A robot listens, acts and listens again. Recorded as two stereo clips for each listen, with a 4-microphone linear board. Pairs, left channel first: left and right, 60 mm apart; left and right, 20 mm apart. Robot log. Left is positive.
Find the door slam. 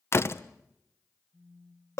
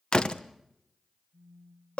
note: The door slam: about 45° left or 135° left.
cmd yaw +45
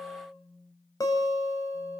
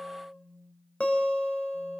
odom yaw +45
cmd idle
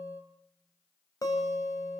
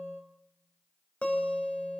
end: I heard a door slam, but can't make it out now. It was about straight ahead or 90° left.